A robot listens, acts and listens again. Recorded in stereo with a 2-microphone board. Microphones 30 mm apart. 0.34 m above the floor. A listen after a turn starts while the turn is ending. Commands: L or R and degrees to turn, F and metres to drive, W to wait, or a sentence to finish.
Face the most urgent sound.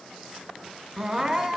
R30
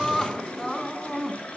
L10
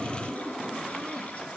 W
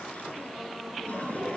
W
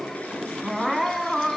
Facing the crying, 2 to 4 m away.